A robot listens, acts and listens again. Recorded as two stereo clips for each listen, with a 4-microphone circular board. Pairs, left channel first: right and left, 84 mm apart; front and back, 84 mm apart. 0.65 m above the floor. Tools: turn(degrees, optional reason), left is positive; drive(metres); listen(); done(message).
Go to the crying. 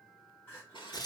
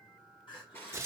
turn(degrees=-25, reason="The crying: 25° right.")
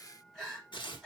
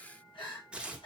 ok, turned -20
drive(metres=1.0)
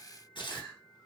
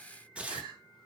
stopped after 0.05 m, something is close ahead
done("Something is in my way. I am facing the crying but have not reached it.")